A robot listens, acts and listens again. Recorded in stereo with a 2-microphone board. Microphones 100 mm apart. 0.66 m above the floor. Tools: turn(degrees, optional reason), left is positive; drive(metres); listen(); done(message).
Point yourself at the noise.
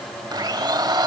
turn(degrees=-45, reason="The blender: about 45° right or 135° right.")
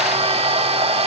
turn(degrees=-90, reason="So it is at 90° right.")
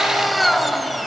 done("Facing the blender.")